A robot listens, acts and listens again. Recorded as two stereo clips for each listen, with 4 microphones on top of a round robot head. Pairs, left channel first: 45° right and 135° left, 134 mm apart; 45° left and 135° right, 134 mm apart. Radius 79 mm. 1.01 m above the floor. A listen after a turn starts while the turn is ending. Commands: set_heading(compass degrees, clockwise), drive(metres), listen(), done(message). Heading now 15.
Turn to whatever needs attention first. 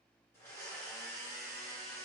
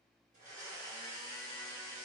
listen()
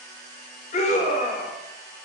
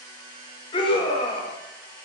set_heading(25)
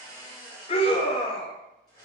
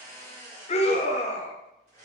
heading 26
done("Found it: a scream, straight ahead.")